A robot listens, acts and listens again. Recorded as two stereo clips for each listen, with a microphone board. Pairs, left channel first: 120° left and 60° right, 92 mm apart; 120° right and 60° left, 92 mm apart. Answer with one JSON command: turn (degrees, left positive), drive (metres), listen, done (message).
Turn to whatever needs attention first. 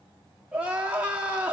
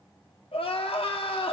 {"turn": -135}
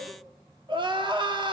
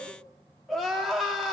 {"turn": -30}
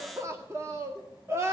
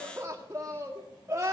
{"done": "Facing the crying, 1 to 2 m away."}